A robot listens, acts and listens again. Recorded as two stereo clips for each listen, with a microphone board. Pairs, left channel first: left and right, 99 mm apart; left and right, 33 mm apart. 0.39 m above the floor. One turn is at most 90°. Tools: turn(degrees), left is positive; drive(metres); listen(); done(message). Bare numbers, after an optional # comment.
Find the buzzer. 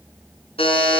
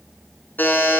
# The buzzer: about 75° left or 105° left.
turn(75)
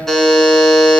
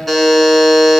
done("Facing the buzzer, 1 to 2 m away.")